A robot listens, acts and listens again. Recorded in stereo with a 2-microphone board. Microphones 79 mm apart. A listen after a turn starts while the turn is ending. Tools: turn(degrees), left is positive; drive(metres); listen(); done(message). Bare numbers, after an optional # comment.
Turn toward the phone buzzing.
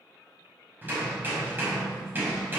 listen()
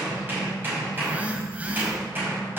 # The phone buzzing: about 20° right or 160° right.
turn(-20)
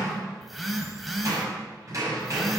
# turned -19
done("Facing the phone buzzing.")